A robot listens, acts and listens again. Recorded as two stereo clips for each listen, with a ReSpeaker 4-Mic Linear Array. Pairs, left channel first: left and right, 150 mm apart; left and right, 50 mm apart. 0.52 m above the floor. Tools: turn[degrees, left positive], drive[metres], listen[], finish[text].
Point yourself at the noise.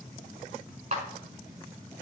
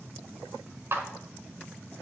Thought: The clap: about 50° right or 130° right.
Action: turn[-50]
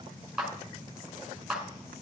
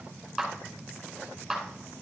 Action: finish[Facing the clap.]